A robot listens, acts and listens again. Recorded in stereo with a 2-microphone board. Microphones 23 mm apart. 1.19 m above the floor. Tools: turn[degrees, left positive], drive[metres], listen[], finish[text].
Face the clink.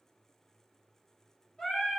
Action: listen[]
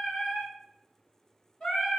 Action: listen[]
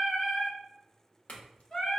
Action: turn[90]
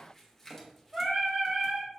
Thought: So it is at 10° left.
Action: turn[10]
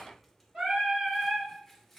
Action: finish[Facing the clink.]